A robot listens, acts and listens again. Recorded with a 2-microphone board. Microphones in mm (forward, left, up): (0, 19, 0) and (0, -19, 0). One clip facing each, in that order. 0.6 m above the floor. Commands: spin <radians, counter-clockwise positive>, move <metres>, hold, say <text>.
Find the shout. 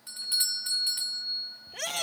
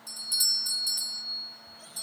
spin 1.57
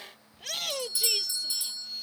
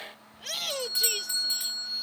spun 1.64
say Found it: a shout, straight ahead.